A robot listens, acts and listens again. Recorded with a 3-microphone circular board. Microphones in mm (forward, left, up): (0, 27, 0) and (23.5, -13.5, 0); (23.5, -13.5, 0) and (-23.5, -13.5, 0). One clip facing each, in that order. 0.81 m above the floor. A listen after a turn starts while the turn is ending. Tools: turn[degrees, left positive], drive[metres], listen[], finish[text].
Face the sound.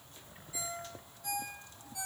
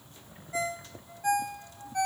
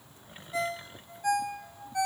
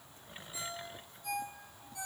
Thought: The ringtone: 25° right.
Action: turn[-25]
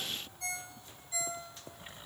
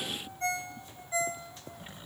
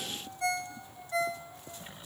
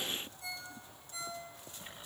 Action: finish[Found it: a ringtone, straight ahead.]